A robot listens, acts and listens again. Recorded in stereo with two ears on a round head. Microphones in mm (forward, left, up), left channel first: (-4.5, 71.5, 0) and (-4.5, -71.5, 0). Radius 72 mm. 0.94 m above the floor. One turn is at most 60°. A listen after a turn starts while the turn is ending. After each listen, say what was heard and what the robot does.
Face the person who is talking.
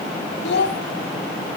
Turn 60° left.
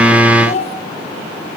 So it is at 45° left. Turn 45° left.
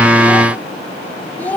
The child speaking is now 10° left. Turn 10° left.
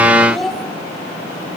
Facing the child speaking.